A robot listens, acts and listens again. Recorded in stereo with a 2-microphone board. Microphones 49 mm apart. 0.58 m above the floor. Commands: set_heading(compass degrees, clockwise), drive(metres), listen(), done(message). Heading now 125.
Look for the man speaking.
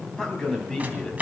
set_heading(95)
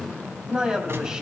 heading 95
set_heading(110)
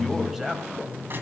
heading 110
done("Found it: a man speaking, straight ahead.")